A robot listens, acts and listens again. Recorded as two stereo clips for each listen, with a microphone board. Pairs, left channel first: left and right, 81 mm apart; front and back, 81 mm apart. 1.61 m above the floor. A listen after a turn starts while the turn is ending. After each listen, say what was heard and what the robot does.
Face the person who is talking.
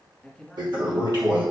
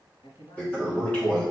Facing the man speaking.